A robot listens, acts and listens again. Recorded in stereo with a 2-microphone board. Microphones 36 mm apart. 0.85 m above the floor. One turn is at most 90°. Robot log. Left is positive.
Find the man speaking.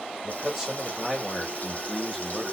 cmd yaw +30
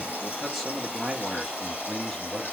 note: The man speaking: about 20° left or 160° left.
cmd yaw +20
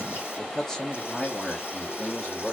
note: The man speaking: about 25° left or 155° left.
cmd yaw +25
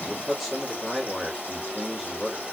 cmd yaw +30
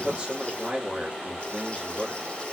note: So it is at 25° right.
cmd yaw -25
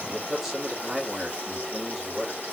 end: Facing the man speaking, 1 to 2 m away.